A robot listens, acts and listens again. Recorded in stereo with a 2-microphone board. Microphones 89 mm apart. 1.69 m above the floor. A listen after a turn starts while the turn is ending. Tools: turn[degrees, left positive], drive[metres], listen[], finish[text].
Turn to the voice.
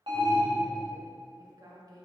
Thought: The woman speaking: about 45° right or 135° right.
Action: turn[-45]
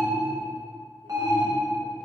Action: listen[]
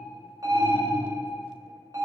Action: listen[]
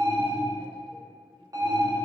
Action: finish[I heard a woman speaking, but can't make it out now. It was about straight ahead or 90° right.]